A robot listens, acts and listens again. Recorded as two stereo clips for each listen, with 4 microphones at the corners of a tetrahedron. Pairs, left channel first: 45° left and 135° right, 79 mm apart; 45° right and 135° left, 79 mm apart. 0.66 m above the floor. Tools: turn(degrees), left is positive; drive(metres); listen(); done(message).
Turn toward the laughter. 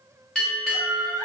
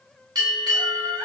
turn(degrees=175)
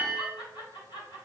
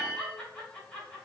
turn(degrees=30)
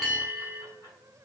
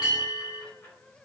listen()
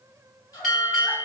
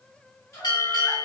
turn(degrees=10)
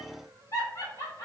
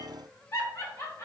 done("Found it: laughter, straight ahead.")